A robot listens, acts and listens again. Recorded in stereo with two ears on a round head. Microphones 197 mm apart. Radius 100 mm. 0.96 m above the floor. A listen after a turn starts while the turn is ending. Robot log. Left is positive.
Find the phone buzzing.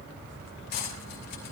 cmd idle
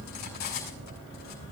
cmd idle
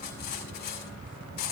end: I can't make out a phone buzzing, only cutlery clinking.